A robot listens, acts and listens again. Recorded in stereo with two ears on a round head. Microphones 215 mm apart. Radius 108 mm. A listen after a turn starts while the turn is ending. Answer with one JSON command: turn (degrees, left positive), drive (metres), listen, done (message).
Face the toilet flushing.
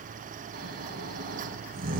{"listen": true}
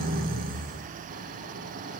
{"listen": true}
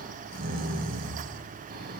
{"done": "I can't make out a toilet flushing, only snoring."}